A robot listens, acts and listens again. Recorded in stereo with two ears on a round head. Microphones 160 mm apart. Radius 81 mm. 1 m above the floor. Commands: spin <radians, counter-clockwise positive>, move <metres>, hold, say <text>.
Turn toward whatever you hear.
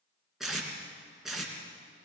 spin 0.52
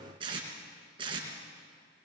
spin -0.52
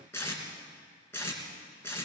spin 0.26
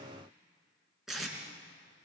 say Facing the tape being pulled.